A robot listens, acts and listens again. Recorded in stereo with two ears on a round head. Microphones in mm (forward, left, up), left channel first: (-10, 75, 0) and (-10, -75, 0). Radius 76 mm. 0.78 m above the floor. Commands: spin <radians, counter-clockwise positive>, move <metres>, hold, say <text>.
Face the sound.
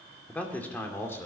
spin 0.52
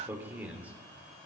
spin -0.17
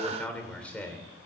spin 0.17
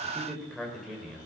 say Facing the man speaking, 2 to 4 m away.